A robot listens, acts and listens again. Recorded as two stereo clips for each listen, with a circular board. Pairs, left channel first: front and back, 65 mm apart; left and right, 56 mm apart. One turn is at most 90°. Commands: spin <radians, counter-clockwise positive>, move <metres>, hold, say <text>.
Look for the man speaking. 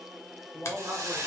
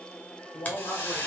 spin 1.57
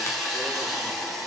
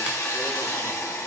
hold
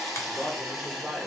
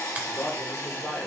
spin 1.57
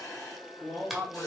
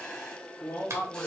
spin 1.48
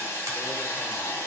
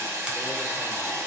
hold
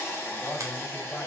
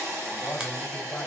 spin 0.52
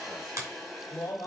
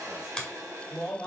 say Found it: a man speaking, straight ahead.